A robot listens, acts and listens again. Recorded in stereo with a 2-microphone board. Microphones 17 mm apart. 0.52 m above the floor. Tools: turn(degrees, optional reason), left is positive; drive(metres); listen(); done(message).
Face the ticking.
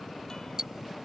turn(degrees=-35, reason="The ticking: about 35° right or 145° right.")
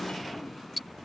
done("Found it: ticking, straight ahead.")